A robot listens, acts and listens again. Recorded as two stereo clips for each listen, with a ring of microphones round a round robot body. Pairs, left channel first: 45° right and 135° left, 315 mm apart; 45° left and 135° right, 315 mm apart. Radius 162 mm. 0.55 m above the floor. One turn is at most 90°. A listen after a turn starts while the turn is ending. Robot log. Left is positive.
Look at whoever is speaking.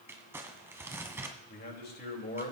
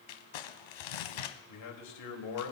note: The man speaking: 15° left.
cmd yaw +15
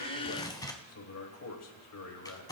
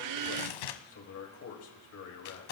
end: Facing the man speaking.